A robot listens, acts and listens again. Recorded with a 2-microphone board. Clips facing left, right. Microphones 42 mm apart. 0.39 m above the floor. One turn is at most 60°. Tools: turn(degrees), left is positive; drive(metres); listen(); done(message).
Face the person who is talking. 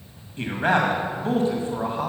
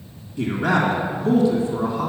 turn(degrees=35)
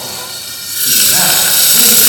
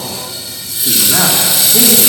listen()
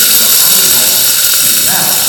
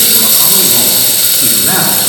listen()
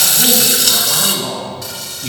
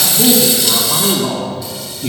done("Facing the man speaking, 1 to 2 m away.")